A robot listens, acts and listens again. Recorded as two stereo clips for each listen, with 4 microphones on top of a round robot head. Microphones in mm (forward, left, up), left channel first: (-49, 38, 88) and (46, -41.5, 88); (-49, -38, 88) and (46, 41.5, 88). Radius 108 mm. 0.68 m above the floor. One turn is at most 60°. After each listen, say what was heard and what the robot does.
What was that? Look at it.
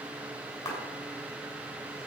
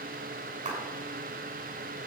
The clap: 70° left. Turn 60° left.
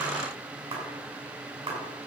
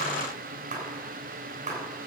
The clap is now 10° left. Turn 10° left.
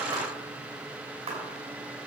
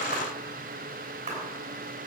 Facing the clap, over 4 m away.